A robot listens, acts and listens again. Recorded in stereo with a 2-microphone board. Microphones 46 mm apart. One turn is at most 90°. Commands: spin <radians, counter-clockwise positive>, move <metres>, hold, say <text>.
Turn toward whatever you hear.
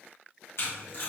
spin 1.13
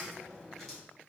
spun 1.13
hold
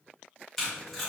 say Found it: tape being pulled, straight ahead.